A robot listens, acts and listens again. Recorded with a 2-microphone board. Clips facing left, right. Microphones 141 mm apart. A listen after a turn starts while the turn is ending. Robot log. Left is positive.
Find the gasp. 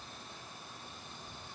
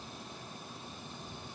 cmd idle
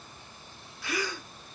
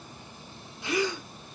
note: The gasp: about 20° right or 160° right.
cmd yaw -20
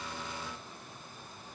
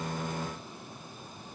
cmd idle
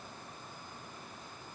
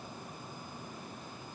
end: I heard a gasp, but can't make it out now. It was about straight ahead or 140° right.